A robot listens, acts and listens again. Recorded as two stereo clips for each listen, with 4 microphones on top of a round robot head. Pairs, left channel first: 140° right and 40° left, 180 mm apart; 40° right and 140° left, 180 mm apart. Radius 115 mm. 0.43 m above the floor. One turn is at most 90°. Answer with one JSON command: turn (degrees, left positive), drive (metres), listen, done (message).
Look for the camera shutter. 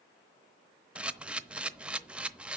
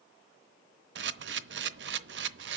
{"turn": 90}
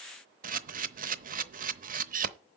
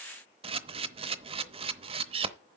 {"turn": 80}
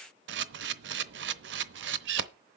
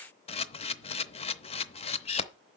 {"turn": 20}
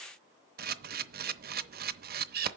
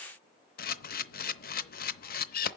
{"done": "Facing the camera shutter, under 1 m away."}